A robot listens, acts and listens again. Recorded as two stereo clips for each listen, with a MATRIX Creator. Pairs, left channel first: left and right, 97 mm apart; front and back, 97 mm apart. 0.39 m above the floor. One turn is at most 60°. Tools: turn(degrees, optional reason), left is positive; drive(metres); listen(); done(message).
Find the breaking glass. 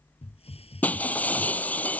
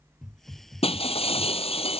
turn(degrees=15, reason="The breaking glass: 15° left.")
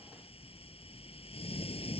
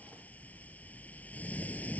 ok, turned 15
done("I heard breaking glass from this way, but can't make it out now.")